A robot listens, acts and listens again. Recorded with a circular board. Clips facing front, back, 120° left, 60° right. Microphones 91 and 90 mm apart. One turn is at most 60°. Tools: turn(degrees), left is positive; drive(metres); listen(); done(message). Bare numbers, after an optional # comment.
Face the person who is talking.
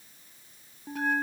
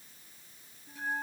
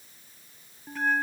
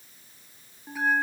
listen()
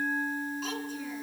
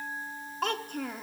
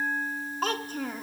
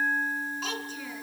# The child speaking: 155° left.
turn(60)
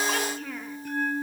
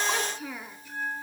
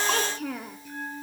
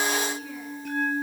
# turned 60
# The child speaking is now 100° left.
turn(60)
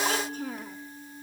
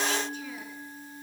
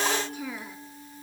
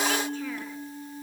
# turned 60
# Nothing new. It was at 40° left.
turn(40)
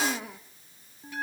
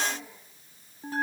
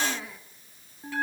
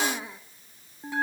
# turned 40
done("Found it: a child speaking, straight ahead.")